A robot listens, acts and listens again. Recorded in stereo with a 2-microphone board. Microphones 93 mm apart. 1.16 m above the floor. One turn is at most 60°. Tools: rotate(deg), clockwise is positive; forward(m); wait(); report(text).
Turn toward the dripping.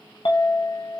wait()
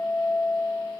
wait()
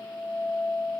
report("I can't make out dripping to turn to.")